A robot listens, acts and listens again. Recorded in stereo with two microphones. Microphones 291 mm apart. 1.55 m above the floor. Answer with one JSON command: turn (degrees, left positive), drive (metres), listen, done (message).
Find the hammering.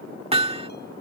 {"turn": -20}
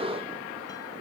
{"listen": true}
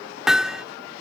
{"done": "Found it: hammering, straight ahead."}